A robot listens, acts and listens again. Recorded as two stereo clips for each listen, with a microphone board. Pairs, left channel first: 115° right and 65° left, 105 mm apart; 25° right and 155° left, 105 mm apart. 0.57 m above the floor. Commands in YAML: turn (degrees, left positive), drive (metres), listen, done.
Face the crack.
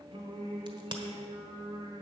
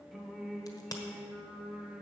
turn: 30
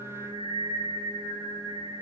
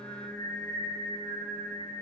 done: "Facing where the crack came from. I can't hear it now."